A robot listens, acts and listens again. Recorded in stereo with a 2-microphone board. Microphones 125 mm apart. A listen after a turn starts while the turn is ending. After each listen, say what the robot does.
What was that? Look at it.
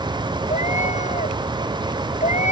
Turn 70° left.
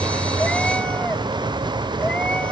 Keep listening.
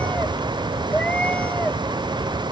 Turn 10° left.
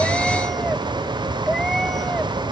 Facing the cat meowing.